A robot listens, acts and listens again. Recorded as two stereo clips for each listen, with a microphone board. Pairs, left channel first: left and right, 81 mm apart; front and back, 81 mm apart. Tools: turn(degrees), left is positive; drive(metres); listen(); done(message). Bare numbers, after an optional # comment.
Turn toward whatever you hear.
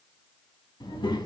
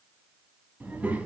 # The child speaking: 110° left.
turn(110)
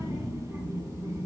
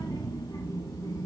# The child speaking is now 40° right.
turn(-40)
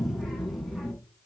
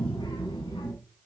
done("Facing the child speaking.")